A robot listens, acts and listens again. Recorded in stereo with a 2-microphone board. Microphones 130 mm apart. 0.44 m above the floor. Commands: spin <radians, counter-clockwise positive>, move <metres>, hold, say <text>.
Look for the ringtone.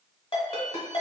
spin 0.79
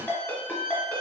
spin 0.17
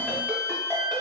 hold
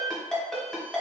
say Found it: a ringtone, straight ahead, 1 to 2 m away.